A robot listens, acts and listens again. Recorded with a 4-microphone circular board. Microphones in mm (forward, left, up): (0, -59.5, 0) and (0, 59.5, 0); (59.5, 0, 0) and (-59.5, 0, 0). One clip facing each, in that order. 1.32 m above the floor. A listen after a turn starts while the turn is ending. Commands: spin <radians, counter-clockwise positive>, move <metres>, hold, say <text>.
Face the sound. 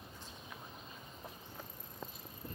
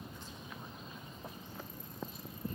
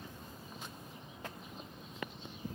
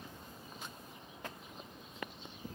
hold
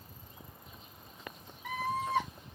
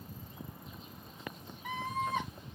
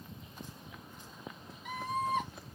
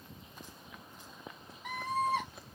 spin 2.79
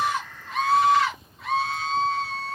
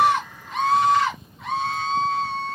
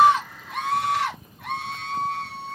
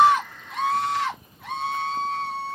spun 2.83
say Facing the scream, over 4 m away.